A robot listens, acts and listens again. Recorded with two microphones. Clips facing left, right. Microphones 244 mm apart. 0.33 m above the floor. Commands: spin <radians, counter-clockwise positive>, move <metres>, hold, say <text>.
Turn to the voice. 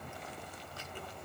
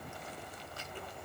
hold
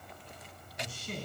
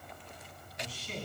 spin 0.87
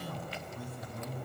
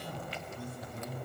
spin 1.31
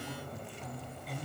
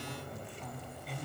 say Found it: a man speaking, straight ahead.